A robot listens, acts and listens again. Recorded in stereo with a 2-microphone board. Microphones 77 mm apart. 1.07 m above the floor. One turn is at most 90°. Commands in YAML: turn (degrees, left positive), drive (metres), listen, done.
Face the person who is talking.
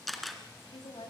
turn: 90
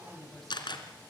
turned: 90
done: "Facing the woman speaking, over 4 m away."